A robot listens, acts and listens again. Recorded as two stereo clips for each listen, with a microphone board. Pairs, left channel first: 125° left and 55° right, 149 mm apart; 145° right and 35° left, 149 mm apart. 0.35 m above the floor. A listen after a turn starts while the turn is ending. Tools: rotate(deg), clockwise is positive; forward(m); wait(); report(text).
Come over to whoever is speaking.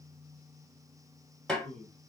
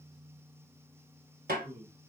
rotate(-105)
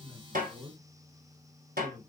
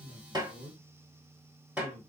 rotate(-20)
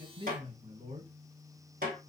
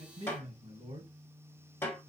forward(1.0)
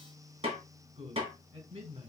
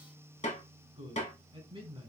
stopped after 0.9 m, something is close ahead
report("I am next to the man speaking.")